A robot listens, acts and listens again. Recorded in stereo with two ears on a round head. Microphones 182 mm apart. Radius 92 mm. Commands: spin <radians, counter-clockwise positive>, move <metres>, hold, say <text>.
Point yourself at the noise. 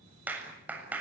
spin -0.52
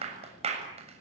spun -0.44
spin -2.53
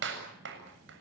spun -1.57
spin -1.05
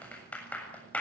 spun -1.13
say Found it: a clap, straight ahead.